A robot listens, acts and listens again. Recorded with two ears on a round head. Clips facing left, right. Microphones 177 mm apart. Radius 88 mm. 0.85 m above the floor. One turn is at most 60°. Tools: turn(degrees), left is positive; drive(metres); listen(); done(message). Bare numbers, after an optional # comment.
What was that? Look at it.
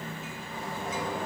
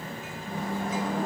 # The microwave: about 40° right or 140° right.
turn(-40)
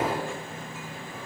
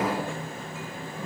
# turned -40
listen()
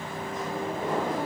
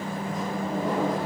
# So it is at 100° right.
turn(-60)
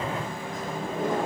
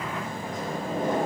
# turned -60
# The microwave is now 35° right.
turn(-35)
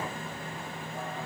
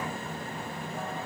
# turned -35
listen()
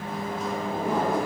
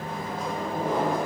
done("Facing the microwave.")